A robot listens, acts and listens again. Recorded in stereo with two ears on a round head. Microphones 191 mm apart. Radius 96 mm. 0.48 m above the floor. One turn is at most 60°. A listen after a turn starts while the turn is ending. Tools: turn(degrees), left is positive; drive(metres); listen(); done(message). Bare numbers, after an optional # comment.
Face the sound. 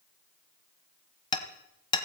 # The hammering: about 20° left or 160° left.
turn(20)
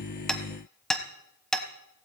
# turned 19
done("Facing the hammering.")